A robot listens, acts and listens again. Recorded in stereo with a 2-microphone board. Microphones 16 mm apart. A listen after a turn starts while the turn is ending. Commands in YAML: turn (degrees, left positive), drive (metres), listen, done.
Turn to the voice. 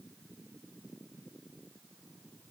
listen: true
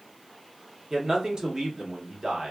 turn: -50
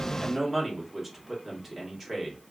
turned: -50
turn: -15
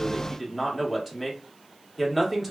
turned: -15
done: "Found it: a man speaking, straight ahead, 1 to 2 m away."